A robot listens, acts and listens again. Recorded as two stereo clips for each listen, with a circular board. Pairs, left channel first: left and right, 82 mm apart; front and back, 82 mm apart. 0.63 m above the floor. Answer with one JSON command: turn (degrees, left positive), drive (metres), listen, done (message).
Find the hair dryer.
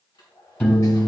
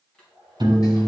{"turn": 80}
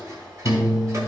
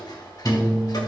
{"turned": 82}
{"listen": true}
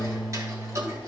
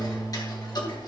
{"listen": true}
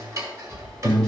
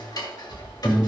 {"done": "I heard a hair dryer from this way, but can't make it out now."}